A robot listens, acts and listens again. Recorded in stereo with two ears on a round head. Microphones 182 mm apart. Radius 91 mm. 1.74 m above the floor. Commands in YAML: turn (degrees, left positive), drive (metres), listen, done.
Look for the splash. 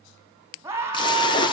turn: 25
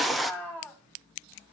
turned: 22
done: "Found it: a splash, straight ahead."